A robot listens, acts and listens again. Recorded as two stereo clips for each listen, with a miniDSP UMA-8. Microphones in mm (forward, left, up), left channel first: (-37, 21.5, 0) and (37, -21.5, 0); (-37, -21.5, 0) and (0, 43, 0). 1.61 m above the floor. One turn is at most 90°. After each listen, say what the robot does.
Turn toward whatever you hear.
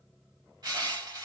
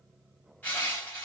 Turn 60° right.
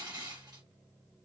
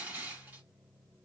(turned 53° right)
Facing the crushing.